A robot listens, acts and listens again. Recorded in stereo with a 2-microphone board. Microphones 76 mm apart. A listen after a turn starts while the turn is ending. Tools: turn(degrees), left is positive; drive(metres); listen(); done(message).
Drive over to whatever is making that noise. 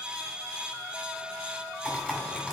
turn(degrees=-30)
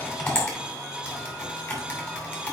turn(degrees=15)
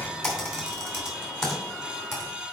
drive(metres=1.0)
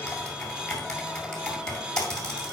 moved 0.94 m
turn(degrees=10)
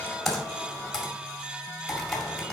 drive(metres=1.0)
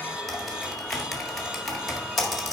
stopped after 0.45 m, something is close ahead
done("Arrived at the typing on a keyboard, straight ahead.")